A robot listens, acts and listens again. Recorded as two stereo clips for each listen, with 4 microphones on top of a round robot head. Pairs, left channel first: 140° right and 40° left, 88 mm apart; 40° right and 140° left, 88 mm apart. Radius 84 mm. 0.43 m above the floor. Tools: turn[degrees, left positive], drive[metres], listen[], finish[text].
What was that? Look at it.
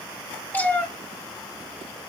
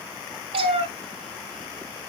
Thought: The cat meowing: 150° left.
Action: turn[150]
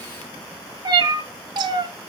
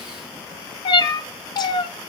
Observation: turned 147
Action: finish[Facing the cat meowing.]